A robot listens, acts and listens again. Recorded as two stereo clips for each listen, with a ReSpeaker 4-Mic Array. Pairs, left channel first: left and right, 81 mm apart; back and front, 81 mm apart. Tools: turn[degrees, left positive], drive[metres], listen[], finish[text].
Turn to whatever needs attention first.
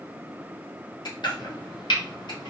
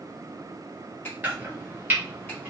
Action: listen[]
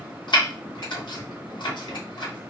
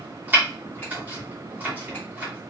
Action: listen[]
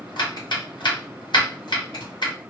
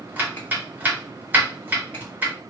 Action: finish[I can't make out anything urgent to turn to.]